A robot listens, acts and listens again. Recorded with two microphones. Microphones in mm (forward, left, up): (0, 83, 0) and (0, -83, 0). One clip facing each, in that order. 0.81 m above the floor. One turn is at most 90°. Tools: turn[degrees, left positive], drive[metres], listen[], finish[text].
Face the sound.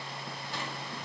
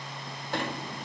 Thought: The sliding door: about 60° right or 120° right.
Action: turn[-60]
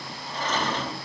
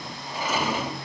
Thought: So it is at 10° right.
Action: turn[-10]
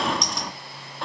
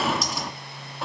Action: finish[Found it: a sliding door, straight ahead, 1 to 2 m away.]